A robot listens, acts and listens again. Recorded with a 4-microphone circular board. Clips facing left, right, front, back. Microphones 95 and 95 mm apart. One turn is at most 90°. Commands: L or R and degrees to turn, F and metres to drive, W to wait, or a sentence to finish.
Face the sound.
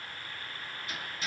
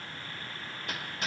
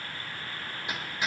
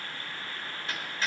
R75
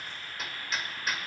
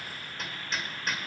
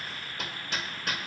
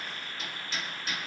Facing the hammering, 1 to 2 m away.